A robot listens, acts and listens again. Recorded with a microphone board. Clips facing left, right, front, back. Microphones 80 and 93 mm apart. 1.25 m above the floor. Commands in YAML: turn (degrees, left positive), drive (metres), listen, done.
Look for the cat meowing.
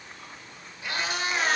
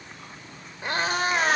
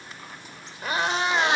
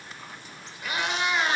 turn: -50
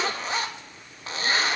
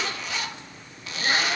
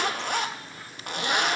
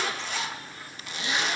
listen: true
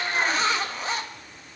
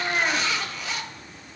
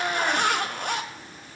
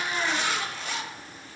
turn: -20
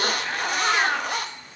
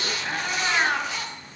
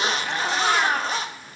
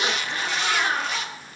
done: "Found it: a cat meowing, straight ahead."